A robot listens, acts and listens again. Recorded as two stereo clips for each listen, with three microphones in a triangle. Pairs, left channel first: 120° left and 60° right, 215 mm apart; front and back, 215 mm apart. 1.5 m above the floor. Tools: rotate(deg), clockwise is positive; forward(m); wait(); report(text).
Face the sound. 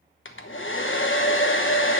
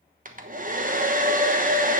rotate(-135)
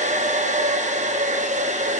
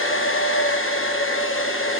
report("Facing the hair dryer.")